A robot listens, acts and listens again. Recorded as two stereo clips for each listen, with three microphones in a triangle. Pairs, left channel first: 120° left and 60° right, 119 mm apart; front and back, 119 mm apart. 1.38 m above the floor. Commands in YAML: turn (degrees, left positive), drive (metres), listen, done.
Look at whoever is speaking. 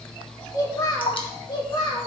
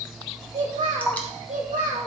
turn: 170
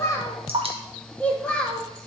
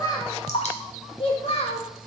turn: 35
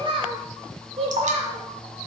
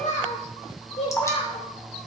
turn: -30
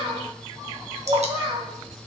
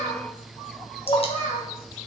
turn: -10
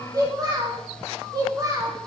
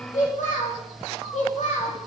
done: "Found it: a child speaking, straight ahead."